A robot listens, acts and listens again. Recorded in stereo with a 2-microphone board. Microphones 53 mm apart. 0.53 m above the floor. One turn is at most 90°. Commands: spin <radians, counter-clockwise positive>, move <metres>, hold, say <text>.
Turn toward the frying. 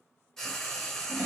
spin 0.52
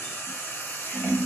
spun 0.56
spin 1.57
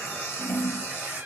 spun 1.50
spin 0.96
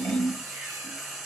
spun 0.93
say Facing the frying, under 1 m away.